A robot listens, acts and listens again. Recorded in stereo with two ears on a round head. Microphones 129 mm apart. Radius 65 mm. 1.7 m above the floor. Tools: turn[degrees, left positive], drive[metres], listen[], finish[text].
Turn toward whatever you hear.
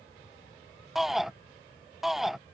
Action: turn[30]
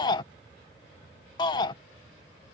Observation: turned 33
Thought: So it is at 150° left.
Action: turn[150]
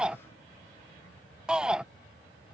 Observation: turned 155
Action: finish[Facing the shout.]